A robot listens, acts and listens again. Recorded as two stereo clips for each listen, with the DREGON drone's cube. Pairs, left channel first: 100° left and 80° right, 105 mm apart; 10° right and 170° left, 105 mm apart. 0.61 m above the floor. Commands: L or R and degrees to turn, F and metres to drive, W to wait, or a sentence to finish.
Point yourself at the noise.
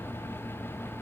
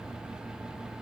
W
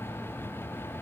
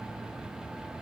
W
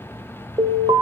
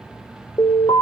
R55
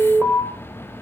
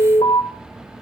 R10
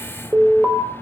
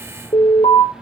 Found it: an alarm, straight ahead, over 4 m away.